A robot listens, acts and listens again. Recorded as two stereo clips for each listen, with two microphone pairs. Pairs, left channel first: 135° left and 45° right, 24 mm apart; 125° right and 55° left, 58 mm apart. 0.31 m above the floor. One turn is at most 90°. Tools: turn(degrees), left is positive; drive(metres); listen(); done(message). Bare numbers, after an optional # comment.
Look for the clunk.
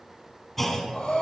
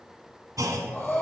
# The clunk: 55° left.
turn(55)
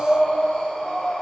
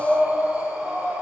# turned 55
done("Facing where the clunk came from. I can't hear it now.")